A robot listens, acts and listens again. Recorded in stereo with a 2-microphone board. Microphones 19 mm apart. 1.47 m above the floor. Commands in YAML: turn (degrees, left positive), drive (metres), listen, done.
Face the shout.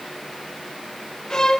listen: true
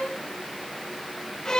listen: true
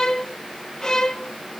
done: "I can't make out a shout, only a violin."